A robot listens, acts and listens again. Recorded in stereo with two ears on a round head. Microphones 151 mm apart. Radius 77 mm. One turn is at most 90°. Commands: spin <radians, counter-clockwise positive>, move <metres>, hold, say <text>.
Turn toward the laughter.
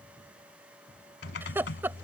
spin -0.52
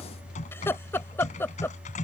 spin 0.26
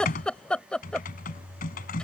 say Found it: laughter, straight ahead.